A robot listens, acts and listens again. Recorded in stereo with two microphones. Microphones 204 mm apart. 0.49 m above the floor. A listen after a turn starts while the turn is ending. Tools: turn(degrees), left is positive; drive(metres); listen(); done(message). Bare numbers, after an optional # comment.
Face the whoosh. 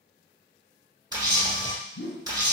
turn(90)
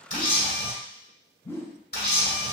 # So it is at 15° left.
turn(15)
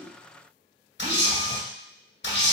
listen()
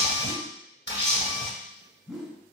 done("Found it: a whoosh, straight ahead.")